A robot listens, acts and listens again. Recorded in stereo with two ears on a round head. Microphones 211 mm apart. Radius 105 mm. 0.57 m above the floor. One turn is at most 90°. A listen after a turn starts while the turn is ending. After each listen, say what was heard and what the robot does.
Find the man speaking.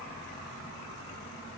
Keep listening.
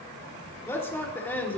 Turn 30° left.
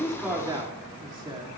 So it is at 20° right. Turn 20° right.
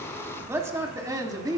The man speaking is now 15° right. Turn 15° right.
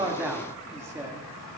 The man speaking is now 15° right. Turn 15° right.
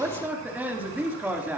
The man speaking is now 10° right. Turn 10° right.
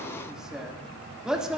Facing the man speaking.